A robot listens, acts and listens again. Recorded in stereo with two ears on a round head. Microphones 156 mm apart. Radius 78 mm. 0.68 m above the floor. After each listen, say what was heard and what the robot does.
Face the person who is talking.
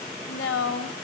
Turn 90° left.
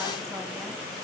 Keep listening.
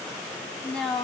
Found it: a woman speaking, straight ahead, over 4 m away.